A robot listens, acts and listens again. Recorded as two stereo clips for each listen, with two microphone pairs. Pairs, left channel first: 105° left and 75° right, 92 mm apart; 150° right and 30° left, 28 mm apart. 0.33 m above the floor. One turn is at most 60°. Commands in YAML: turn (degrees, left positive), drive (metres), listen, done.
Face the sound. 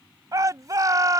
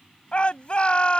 turn: -60
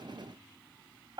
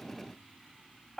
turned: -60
turn: -60
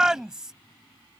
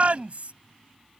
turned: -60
done: "Facing the shout."